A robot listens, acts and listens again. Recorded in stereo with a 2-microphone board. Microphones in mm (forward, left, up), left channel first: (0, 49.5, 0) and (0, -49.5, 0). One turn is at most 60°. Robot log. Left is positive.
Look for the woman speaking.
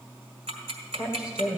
cmd yaw -30
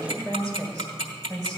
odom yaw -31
note: So it is at 140° right.
cmd yaw -60
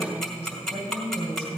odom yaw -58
note: The woman speaking is now 75° right.
cmd yaw -60
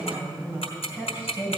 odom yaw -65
note: The woman speaking is now 20° right.
cmd yaw -20
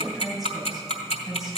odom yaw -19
end: Facing the woman speaking, over 4 m away.